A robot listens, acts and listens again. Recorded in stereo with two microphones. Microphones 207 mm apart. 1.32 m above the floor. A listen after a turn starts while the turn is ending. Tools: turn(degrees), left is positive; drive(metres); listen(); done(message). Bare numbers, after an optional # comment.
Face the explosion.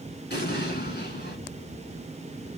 # The explosion: about 55° left or 125° left.
turn(55)
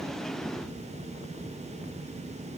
listen()
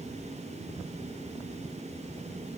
done("I heard an explosion, but can't make it out now. It was about straight ahead or 70° left.")